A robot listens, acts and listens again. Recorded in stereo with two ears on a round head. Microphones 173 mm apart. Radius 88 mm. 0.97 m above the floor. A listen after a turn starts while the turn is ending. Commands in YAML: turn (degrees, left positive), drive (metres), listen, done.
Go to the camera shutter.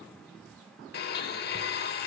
listen: true
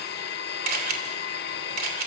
turn: -45
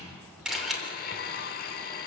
drive: 1.0
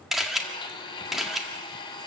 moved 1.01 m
drive: 1.0
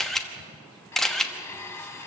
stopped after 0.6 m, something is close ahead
done: "Arrived at the camera shutter, straight ahead."